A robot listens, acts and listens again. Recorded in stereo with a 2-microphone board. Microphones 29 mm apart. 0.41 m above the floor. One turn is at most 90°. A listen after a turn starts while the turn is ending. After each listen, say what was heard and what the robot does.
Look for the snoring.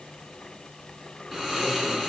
The snoring: about 20° right or 160° right. Turn 20° right.
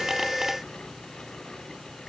Facing the snoring.